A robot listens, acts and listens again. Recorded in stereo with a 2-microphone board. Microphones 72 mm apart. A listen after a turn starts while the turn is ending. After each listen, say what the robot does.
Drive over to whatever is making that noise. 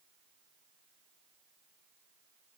Keep listening.
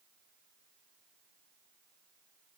Keep listening.
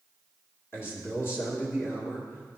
Turn 35° left.
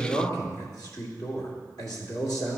Turn 110° left.
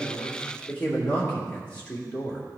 Turn 20° left.
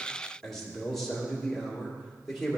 Drive 1.0 m forward.
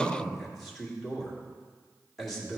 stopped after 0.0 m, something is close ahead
Something is in my way. I am facing the man speaking but have not reached it.